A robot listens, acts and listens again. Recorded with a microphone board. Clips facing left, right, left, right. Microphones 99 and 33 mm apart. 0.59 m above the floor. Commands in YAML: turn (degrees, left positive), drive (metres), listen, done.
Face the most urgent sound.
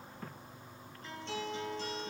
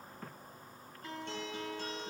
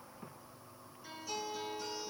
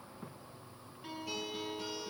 listen: true
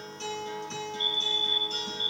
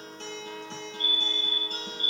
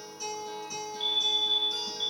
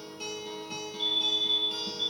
turn: -55
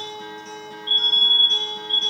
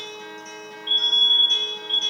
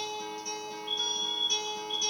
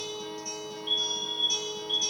turn: -55
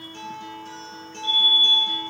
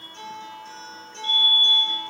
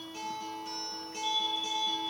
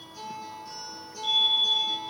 done: "Facing the fire alarm, 2 to 4 m away."